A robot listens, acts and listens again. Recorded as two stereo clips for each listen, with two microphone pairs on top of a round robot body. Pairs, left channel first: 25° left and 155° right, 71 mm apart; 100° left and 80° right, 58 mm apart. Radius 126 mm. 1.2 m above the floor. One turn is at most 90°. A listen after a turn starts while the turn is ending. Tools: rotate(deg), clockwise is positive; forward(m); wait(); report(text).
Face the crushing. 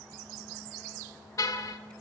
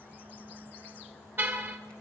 wait()
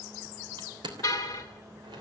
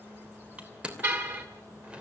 rotate(90)
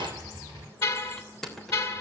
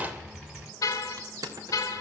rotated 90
rotate(60)
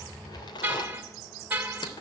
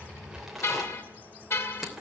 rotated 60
rotate(-10)
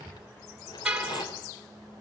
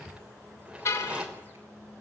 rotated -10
report("Facing the crushing, 2 to 4 m away.")